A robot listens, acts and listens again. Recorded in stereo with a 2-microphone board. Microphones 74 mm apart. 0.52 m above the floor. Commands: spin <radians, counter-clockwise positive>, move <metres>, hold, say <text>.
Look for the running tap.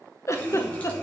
spin 0.35
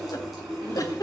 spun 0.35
say Facing the running tap.